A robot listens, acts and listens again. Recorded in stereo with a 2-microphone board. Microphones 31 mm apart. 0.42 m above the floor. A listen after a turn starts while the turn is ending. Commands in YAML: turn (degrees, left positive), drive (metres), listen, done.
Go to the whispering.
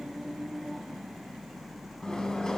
listen: true
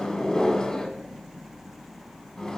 listen: true
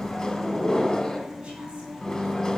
done: "I can't make out whispering to turn to."